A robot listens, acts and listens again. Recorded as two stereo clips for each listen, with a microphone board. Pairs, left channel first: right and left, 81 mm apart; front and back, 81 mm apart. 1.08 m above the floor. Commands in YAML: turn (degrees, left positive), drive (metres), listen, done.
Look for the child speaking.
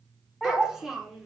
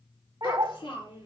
done: "Facing the child speaking."